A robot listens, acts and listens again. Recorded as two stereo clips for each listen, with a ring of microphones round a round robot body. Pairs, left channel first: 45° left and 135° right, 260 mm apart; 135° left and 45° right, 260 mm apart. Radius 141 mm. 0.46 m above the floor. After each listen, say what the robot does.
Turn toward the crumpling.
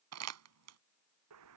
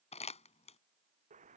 Turn 160° right.
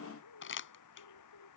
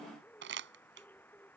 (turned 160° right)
Found it: crumpling, straight ahead.